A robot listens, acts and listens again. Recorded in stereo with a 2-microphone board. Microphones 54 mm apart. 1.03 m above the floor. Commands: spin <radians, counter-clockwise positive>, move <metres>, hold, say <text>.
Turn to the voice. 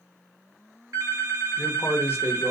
spin 0.79
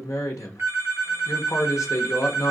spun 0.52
spin 1.66
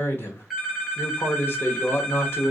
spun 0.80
spin 0.87
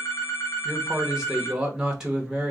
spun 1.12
spin -0.26
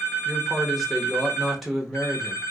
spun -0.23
say Facing the man speaking.